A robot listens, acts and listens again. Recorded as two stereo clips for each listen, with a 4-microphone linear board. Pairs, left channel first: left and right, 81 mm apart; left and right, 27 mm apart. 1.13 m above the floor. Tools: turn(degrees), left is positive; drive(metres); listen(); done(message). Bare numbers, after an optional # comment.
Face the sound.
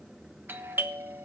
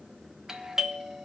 # The doorbell: about 25° right or 155° right.
turn(-25)
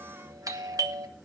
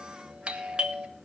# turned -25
# So it is at 130° right.
turn(-130)
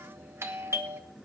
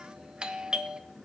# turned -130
# The doorbell is now 35° right.
turn(-35)
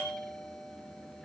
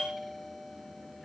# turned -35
done("Found it: a doorbell, straight ahead, 1 to 2 m away.")